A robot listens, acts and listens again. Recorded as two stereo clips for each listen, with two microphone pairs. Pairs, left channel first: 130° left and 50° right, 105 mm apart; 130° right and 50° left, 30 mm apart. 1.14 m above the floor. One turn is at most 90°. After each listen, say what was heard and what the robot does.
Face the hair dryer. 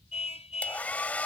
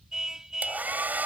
The hair dryer: 60° left. Turn 60° left.
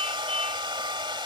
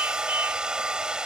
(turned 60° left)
The hair dryer is now 10° right. Turn 10° right.
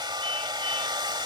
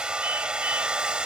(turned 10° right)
Facing the hair dryer.